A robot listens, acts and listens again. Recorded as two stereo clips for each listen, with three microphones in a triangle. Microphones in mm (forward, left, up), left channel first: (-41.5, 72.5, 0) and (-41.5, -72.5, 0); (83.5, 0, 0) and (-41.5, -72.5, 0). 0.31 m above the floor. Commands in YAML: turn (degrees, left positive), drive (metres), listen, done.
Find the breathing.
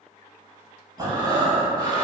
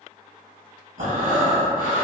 turn: -150
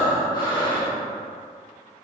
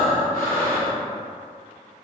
turn: 35
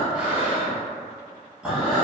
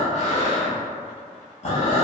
done: "Found it: breathing, straight ahead."